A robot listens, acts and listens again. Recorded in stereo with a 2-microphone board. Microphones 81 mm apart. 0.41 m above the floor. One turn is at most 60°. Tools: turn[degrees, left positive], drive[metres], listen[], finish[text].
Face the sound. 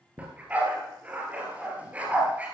Thought: The dog barking: about 15° right or 165° right.
Action: turn[-15]
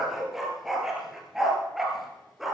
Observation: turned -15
Action: finish[Facing the dog barking, 2 to 4 m away.]